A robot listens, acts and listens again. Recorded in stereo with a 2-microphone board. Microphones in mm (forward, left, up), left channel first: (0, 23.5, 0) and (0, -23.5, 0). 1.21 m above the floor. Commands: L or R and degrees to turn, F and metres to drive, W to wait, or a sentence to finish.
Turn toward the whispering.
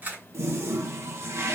W
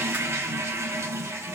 W
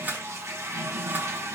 I can't make out whispering to turn to.